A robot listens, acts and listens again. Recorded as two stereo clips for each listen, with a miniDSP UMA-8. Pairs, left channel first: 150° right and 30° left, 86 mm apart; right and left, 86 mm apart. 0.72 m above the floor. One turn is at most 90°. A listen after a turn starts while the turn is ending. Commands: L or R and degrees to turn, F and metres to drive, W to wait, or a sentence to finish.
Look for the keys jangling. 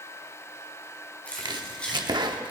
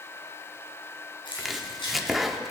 R75
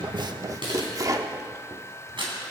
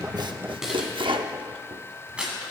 L15
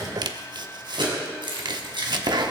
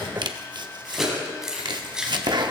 L10
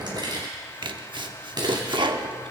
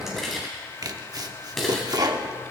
Facing the keys jangling.